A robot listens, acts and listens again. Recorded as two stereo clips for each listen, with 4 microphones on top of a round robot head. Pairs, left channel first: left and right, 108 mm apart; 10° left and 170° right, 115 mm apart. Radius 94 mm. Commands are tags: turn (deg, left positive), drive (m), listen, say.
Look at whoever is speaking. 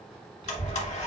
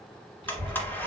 <turn deg="-125"/>
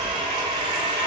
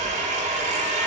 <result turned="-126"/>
<say>Found it: a child speaking, straight ahead, 2 to 4 m away.</say>